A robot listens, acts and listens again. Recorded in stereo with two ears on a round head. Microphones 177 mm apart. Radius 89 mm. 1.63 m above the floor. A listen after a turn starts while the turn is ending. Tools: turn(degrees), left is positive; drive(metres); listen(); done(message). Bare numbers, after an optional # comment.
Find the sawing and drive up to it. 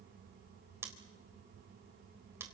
listen()
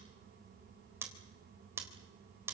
listen()
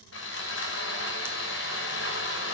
# The sawing: about 70° left or 110° left.
turn(70)
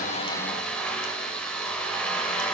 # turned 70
drive(1.0)
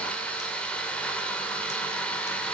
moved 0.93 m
drive(1.0)
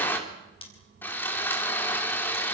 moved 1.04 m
# The sawing is now 10° left.
turn(10)
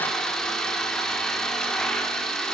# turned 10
drive(1.0)
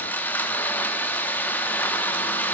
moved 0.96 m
# The sawing is now 10° left.
turn(10)
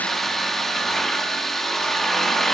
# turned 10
drive(1.0)
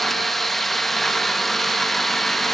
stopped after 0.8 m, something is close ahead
done("I am next to the sawing.")